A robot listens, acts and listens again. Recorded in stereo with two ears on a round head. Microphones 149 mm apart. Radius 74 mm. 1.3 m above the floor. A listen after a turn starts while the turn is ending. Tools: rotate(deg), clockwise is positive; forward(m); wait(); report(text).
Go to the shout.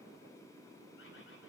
wait()
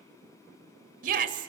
rotate(55)
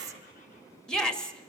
forward(1.0)
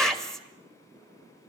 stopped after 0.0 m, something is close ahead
report("Something is in my way. I am facing the shout but have not reached it.")